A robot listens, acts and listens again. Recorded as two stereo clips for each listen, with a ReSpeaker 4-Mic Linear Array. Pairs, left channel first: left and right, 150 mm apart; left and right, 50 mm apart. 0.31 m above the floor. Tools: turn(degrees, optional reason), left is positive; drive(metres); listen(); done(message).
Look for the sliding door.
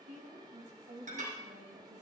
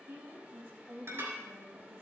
listen()
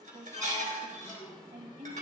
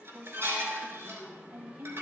turn(degrees=20, reason="The sliding door: about 20° left or 160° left.")
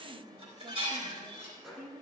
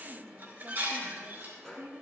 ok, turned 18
done("Facing the sliding door, 2 to 4 m away.")